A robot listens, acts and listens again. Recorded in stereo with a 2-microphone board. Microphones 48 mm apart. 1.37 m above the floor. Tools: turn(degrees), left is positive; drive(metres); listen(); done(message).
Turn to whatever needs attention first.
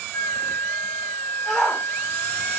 turn(degrees=30)
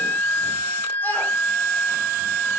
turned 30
listen()
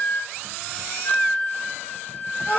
turn(degrees=140)
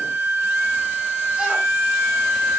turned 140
listen()
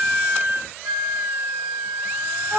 turn(degrees=-20)
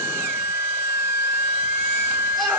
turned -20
listen()
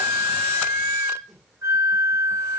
listen()
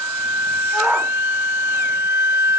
done("Facing the shout.")